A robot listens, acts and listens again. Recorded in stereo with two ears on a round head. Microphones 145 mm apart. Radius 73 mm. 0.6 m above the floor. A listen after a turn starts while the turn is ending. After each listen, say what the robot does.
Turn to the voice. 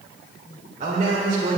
Turn 50° right.
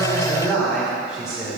Found it: a man speaking, straight ahead.